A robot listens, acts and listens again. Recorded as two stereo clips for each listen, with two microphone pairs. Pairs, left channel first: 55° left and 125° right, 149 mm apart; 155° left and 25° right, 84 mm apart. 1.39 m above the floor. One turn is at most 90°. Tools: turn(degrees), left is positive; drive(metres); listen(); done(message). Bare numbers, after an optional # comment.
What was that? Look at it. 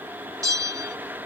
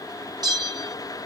# The bell: 60° right.
turn(-60)
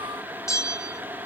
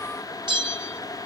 # The bell is now 15° right.
turn(-15)
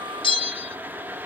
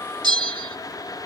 done("Found it: a bell, straight ahead.")